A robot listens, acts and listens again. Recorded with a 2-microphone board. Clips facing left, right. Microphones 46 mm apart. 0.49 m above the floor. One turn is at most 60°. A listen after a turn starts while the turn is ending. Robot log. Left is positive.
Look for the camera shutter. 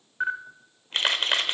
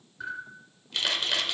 note: The camera shutter: about 45° left or 135° left.
cmd yaw +45
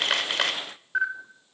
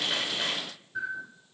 note: So it is at 90° left.
cmd yaw +60
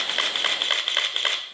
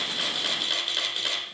note: The camera shutter is now 50° left.
cmd yaw +50
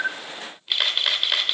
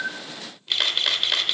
end: Facing the camera shutter.